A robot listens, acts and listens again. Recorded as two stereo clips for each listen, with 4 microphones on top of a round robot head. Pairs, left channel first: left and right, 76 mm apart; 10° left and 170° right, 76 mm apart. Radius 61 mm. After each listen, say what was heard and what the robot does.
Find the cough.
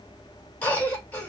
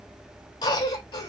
The cough: 20° left. Turn 20° left.
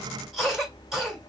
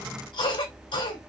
Found it: a cough, straight ahead.